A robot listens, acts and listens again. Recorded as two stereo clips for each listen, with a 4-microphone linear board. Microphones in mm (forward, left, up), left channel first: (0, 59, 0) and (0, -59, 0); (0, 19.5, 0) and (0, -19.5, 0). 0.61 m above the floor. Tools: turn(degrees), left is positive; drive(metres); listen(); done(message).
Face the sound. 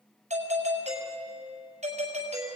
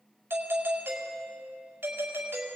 turn(degrees=-75)
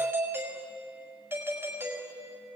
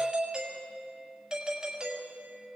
turn(degrees=-20)
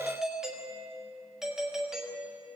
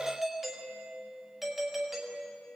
done("Facing the doorbell.")